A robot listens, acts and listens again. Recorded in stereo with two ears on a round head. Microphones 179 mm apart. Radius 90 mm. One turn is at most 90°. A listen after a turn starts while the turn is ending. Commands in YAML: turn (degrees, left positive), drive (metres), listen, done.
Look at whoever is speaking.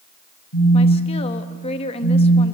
turn: 30
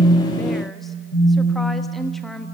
done: "Facing the woman speaking, 1 to 2 m away."